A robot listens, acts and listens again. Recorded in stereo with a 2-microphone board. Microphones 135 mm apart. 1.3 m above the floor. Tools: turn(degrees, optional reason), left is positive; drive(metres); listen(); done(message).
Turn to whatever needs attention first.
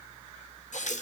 listen()
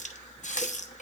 listen()
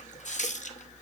done("I can't make out anything urgent to turn to.")